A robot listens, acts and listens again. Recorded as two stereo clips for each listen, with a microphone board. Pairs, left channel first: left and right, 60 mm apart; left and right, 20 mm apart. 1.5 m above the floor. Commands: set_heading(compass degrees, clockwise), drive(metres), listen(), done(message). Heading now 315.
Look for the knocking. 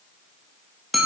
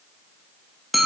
listen()
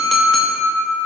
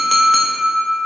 listen()
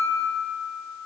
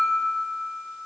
done("I can't make out knocking, only a clink.")